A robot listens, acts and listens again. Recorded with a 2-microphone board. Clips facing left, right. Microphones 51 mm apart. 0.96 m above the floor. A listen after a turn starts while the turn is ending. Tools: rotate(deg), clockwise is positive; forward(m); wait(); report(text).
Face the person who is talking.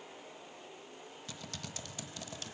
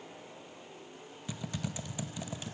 wait()
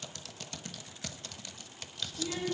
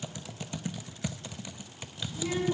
rotate(90)
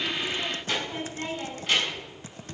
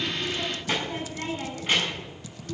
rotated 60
rotate(20)
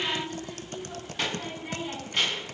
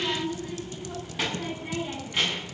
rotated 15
report("Found it: a child speaking, straight ahead, over 4 m away.")